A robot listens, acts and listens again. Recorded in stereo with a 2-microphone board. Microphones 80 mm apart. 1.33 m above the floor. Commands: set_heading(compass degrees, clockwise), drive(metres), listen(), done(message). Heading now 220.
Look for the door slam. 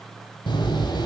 set_heading(130)
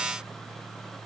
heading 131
done("I heard a door slam from this way, but can't make it out now.")